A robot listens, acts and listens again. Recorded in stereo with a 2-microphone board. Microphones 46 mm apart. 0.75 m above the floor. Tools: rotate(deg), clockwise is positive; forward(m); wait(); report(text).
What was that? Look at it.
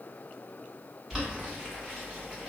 rotate(30)
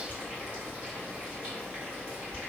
rotate(145)
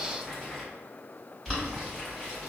rotate(-10)
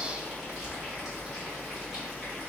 report("Found it: boiling, straight ahead, 1 to 2 m away.")